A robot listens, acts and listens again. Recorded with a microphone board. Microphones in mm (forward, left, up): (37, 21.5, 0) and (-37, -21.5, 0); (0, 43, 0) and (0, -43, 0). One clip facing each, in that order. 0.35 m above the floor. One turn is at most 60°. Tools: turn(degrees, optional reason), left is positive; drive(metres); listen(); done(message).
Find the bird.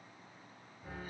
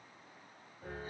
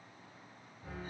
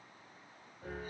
listen()
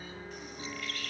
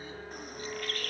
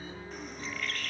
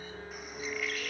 turn(degrees=-60, reason="The bird: 175° right.")
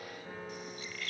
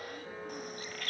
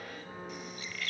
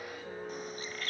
turn(degrees=-60, reason="The bird is now 130° right.")
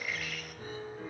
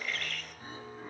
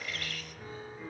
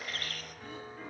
turn(degrees=-50, reason="The bird is now 50° right.")
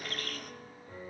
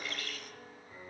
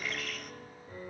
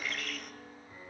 done("Found it: a bird, straight ahead.")